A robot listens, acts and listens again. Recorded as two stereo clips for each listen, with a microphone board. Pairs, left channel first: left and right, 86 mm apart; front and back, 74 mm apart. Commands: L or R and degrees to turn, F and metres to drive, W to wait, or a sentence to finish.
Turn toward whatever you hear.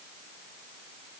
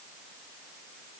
W
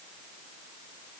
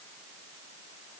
W
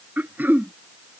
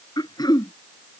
R20
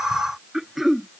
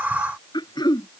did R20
Facing the throat clearing.